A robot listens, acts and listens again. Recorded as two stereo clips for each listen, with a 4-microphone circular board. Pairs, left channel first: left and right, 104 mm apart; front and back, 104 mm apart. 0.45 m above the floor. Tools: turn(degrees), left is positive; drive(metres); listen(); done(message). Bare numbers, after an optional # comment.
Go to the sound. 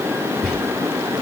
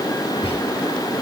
drive(1.0)
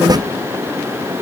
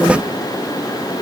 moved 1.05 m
listen()
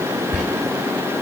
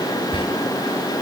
drive(1.0)
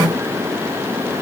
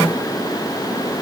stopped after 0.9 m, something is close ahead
listen()
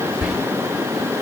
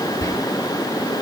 # The whispering is now 15° right.
turn(-15)
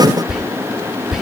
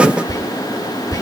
done("I am next to the whispering.")